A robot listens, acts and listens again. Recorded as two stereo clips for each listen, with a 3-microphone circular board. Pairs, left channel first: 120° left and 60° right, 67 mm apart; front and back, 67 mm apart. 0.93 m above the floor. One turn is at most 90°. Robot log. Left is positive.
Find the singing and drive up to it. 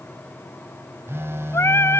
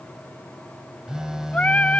note: The singing: 70° left.
cmd yaw +70
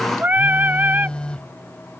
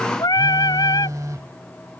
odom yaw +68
cmd fwd 1.0
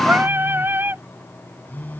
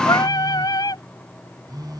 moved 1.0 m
cmd fwd 1.0
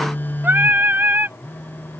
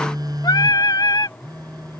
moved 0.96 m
cmd fwd 1.0
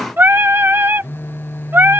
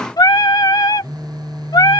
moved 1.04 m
cmd fwd 1.0
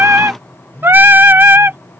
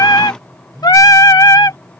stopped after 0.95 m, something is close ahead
end: I am next to the singing.